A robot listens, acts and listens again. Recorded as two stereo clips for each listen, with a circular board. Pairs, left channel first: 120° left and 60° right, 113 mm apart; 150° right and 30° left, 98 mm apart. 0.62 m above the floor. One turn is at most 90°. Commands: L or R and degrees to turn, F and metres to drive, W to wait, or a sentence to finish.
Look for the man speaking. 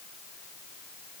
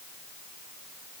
W
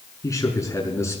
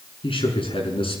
R90
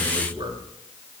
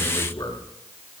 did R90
R90
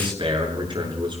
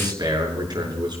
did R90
R15
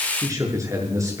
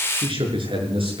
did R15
Facing the man speaking.